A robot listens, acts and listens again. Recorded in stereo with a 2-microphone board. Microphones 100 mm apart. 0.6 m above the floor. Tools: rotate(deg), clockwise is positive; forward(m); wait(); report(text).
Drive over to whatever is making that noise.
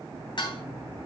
rotate(-50)
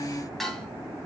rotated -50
forward(1.0)
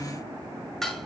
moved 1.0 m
forward(1.0)
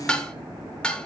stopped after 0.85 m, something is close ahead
rotate(-10)
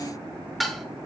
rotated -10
report("Arrived at the dishes clattering, straight ahead.")